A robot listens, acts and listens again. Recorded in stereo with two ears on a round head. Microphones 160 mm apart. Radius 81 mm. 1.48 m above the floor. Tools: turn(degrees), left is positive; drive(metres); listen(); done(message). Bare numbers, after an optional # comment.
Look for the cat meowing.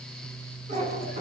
# The cat meowing: about 40° right or 140° right.
turn(-40)
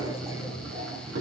# So it is at 105° right.
turn(-105)
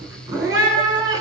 # The cat meowing is now 20° right.
turn(-20)
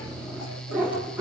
# The cat meowing is now 10° right.
turn(-10)
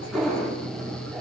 done("Found it: a cat meowing, straight ahead.")